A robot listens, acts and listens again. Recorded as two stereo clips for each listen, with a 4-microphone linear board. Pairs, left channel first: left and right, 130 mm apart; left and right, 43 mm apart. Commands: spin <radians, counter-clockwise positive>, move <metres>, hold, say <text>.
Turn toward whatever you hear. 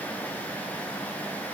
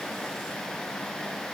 hold
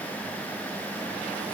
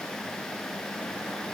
hold
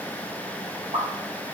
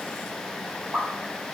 spin -1.05
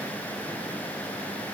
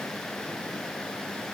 hold
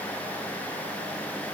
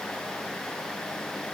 say I heard a pop, but can't make it out now. It was about straight ahead or 60° right.